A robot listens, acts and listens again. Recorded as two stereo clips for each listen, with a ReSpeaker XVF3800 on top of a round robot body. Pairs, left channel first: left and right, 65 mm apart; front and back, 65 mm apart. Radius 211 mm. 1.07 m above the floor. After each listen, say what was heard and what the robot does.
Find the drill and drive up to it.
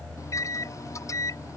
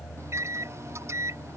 Keep listening.
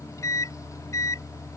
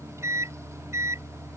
Keep listening.
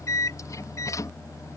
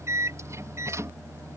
I can't make out a drill, only a microwave.